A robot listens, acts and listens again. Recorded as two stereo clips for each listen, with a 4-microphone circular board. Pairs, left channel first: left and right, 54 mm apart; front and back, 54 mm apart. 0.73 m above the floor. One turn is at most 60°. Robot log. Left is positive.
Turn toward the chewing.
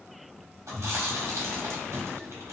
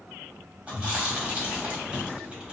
note: The chewing: 110° right.
cmd yaw -60
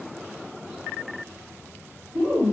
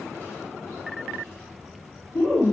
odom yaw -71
note: The chewing is now 40° right.
cmd yaw -40
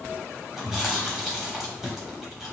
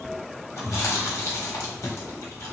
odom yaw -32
note: The chewing is now 10° right.
cmd yaw -10
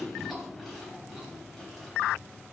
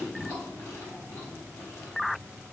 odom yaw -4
end: Found it: chewing, straight ahead, 1 to 2 m away.